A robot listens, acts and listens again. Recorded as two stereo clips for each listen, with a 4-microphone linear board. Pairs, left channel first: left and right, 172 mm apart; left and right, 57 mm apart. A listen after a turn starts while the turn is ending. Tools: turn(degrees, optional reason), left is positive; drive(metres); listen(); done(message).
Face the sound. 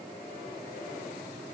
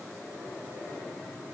listen()
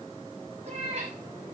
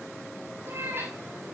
turn(degrees=-40, reason="The cat meowing: about 40° right or 140° right.")
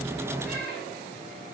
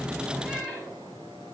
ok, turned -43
listen()
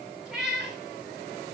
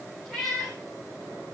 done("Facing the cat meowing.")